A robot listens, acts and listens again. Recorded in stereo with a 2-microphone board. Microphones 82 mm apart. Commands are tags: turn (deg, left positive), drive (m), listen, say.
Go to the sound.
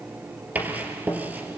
<turn deg="-20"/>
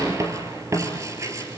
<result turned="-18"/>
<turn deg="-140"/>
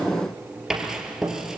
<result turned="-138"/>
<drive m="1.0"/>
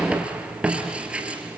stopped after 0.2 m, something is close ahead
<turn deg="-10"/>
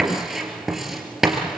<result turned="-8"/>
<say>Blocked. The writing is further on, straight ahead.</say>